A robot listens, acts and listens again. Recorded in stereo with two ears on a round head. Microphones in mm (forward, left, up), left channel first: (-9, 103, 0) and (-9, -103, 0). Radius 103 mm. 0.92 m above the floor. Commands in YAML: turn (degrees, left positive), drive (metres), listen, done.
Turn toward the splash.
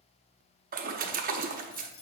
turn: -35
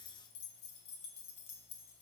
listen: true
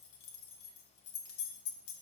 done: "I heard a splash, but can't make it out now. It was about straight ahead or 110° right."